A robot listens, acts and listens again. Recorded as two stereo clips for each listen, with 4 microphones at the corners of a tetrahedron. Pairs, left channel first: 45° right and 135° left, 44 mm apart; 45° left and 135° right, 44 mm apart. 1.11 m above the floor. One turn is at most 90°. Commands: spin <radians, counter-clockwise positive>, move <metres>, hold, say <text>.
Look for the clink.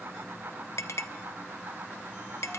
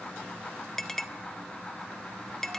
spin -0.61
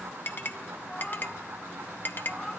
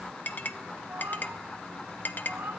say Facing the clink.